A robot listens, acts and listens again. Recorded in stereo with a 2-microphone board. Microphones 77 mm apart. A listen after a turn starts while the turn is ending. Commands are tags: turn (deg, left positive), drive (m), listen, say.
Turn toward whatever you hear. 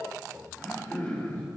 <turn deg="20"/>
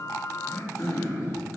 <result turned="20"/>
<turn deg="140"/>
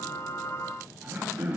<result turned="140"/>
<turn deg="-25"/>
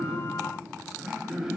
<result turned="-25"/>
<turn deg="-10"/>
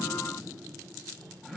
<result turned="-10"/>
<say>Found it: throat clearing, straight ahead.</say>